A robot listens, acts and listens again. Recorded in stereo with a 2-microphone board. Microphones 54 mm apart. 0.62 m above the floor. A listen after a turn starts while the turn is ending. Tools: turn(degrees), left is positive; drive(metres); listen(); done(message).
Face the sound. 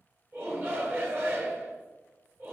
turn(degrees=-45)
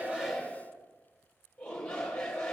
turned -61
turn(degrees=15)
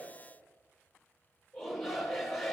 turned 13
done("Facing the shout.")